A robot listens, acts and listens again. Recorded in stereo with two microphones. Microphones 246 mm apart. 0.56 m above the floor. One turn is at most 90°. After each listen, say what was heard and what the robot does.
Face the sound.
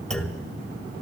Turn 30° left.
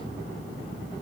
Keep listening.
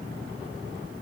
I heard a clunk, but can't make it out now. It was about 25° right or 145° left.